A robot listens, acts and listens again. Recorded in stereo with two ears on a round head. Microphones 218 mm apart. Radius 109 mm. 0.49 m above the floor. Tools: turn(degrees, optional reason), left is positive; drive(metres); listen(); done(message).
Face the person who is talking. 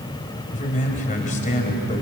turn(degrees=35, reason="The man speaking: about 35° left or 145° left.")
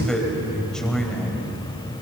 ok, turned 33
done("Facing the man speaking.")